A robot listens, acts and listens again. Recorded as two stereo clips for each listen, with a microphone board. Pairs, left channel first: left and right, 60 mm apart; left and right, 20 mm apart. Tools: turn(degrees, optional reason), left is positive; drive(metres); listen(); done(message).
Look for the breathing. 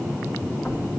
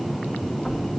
listen()
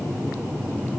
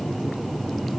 listen()
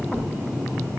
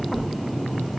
done("I can't make out breathing.")